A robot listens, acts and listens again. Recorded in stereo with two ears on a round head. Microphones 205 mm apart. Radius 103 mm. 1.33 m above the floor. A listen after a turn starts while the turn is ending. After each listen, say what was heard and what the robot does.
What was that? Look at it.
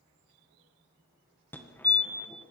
Turn 30° left.
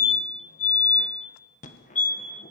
So it is at 140° left. Turn 140° left.
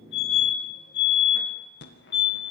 The fire alarm is now 60° left. Turn 60° left.
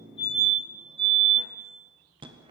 The fire alarm is now 25° right. Turn 25° right.
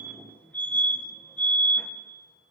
The fire alarm is now 10° left. Turn 10° left.
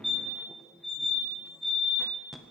Facing the fire alarm, 1 to 2 m away.